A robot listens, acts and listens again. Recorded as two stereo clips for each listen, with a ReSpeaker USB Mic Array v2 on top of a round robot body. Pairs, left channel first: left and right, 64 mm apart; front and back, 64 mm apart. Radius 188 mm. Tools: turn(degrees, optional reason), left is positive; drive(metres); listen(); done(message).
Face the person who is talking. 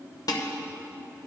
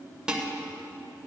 listen()
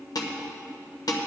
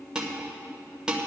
listen()
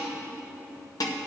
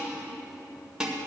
done("I can't make out anyone speaking, only dishes clattering.")